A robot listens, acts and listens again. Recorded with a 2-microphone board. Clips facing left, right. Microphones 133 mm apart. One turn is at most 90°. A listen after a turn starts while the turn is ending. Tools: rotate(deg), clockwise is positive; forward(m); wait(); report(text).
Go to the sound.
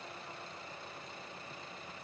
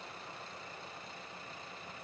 wait()
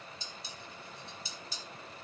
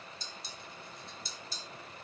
rotate(-30)
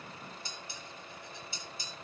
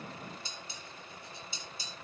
rotate(30)
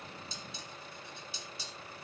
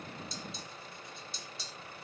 forward(1.0)
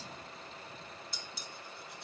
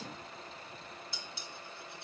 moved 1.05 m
forward(1.0)
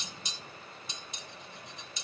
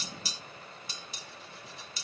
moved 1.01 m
forward(1.0)
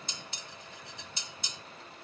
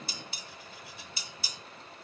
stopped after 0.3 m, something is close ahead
report("I am next to the dishes clattering.")